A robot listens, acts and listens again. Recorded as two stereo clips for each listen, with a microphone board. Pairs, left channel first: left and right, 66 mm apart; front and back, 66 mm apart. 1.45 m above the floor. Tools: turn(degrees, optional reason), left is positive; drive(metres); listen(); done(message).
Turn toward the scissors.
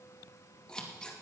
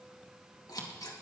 turn(degrees=10, reason="The scissors: 10° left.")
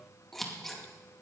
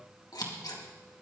done("Found it: scissors, straight ahead, 2 to 4 m away.")